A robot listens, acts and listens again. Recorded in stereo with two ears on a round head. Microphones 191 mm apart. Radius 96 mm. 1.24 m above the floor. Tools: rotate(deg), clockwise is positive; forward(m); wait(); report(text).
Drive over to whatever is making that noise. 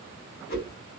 rotate(-45)
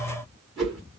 forward(1.0)
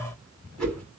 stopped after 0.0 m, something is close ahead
report("Something is in my way. I am facing the whoosh but have not reached it.")